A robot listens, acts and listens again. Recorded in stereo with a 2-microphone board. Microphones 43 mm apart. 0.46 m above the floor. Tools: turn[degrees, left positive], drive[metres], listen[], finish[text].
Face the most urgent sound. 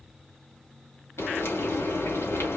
Action: listen[]
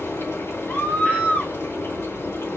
Thought: The scream: about 35° left or 145° left.
Action: turn[35]
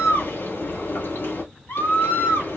Thought: So it is at 100° left.
Action: turn[100]
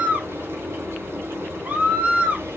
Thought: The scream is now 40° right.
Action: turn[-40]
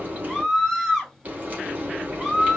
Action: finish[Facing the scream, 2 to 4 m away.]